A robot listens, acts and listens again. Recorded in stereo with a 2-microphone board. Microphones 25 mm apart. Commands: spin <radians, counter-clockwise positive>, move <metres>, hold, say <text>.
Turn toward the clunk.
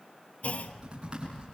spin 1.05
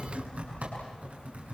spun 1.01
hold
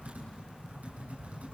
say I heard a clunk, but can't make it out now. It was about straight ahead or 60° left.